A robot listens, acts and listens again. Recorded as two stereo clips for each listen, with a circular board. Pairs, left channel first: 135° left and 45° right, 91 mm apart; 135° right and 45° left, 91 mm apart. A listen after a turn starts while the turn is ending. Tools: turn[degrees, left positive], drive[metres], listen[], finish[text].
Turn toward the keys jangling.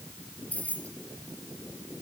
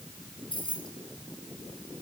Thought: The keys jangling: 150° right.
Action: turn[-150]
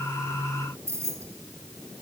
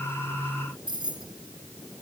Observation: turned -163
Thought: The keys jangling is now 15° left.
Action: turn[15]
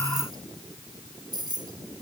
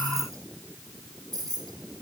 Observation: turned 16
Action: finish[Facing the keys jangling, 2 to 4 m away.]